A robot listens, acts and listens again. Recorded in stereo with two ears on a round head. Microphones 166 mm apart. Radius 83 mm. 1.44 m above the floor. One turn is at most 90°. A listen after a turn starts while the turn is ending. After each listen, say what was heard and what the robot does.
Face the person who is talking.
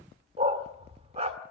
Keep listening.
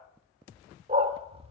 Keep listening.
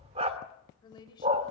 The woman speaking: about 25° left or 155° left. Turn 25° left.
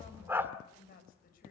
So it is at 130° left. Turn 90° left.
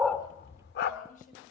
The woman speaking is now 45° left. Turn 45° left.
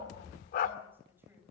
The woman speaking is now 10° right. Turn 10° right.
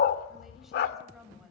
Found it: a woman speaking, straight ahead.